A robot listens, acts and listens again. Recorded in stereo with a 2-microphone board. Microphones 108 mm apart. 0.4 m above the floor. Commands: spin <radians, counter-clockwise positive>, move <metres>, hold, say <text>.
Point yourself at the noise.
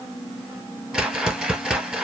spin -0.52
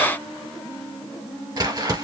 spin -2.53
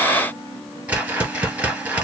spin -0.26
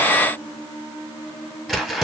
say Found it: a whoosh, straight ahead.